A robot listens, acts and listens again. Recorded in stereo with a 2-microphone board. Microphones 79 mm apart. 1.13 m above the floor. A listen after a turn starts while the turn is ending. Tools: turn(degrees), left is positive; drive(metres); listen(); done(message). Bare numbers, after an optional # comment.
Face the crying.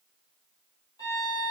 listen()
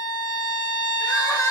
# The crying: about 45° left or 135° left.
turn(45)
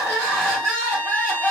done("Facing the crying.")